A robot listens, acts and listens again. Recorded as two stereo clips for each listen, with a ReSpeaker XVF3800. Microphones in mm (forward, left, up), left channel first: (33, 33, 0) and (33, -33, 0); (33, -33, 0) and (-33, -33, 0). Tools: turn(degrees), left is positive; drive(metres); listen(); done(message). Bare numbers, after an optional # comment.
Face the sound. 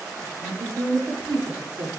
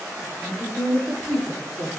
# The woman speaking: 80° right.
turn(-80)
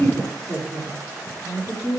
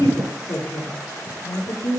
# The woman speaking is now 15° left.
turn(15)
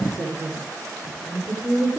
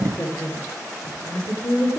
done("Facing the woman speaking, over 4 m away.")